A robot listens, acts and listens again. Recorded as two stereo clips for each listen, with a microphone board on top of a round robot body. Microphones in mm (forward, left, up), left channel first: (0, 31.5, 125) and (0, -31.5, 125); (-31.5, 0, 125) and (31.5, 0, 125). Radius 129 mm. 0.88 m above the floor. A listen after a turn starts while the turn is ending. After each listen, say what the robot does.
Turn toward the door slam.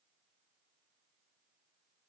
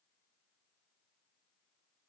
Keep listening.
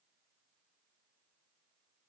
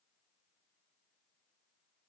Keep listening.
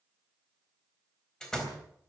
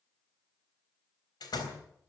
Turn 170° left.
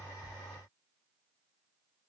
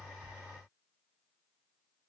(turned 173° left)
I heard a door slam from this way, but can't make it out now.